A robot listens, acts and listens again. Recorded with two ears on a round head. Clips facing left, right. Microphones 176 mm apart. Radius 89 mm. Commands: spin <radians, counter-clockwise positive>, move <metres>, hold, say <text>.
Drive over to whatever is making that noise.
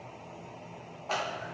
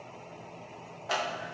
spin -0.52
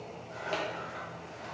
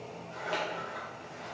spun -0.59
spin 0.35
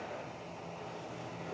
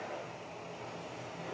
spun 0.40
hold
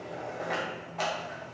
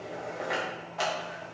move 1.0
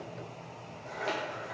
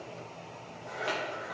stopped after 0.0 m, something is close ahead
say Blocked. The scissors is further on, straight ahead.